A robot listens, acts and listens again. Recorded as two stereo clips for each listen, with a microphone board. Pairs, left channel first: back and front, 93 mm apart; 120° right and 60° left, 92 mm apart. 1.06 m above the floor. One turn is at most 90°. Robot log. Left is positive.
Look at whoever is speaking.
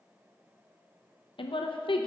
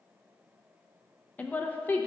note: The woman speaking: 170° left.
cmd yaw +90
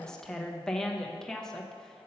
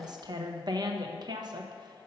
note: The woman speaking is now 95° left.
cmd yaw +90
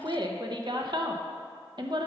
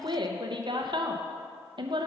note: The woman speaking is now 30° left.
cmd yaw +30
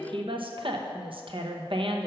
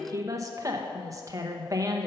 note: The woman speaking is now 10° left.
cmd yaw +10
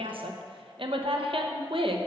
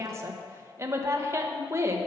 end: Found it: a woman speaking, straight ahead, under 1 m away.